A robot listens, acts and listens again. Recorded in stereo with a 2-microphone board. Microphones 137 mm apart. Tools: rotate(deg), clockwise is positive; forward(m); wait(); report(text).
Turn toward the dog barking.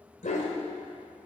rotate(-65)
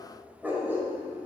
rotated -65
rotate(15)
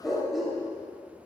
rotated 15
report("Facing the dog barking, 2 to 4 m away.")